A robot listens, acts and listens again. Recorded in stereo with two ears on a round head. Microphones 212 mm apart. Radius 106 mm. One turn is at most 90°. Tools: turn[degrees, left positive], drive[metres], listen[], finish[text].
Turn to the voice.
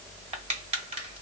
Action: listen[]
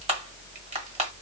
Action: listen[]
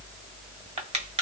Action: finish[I can't make out anyone speaking, only crushing.]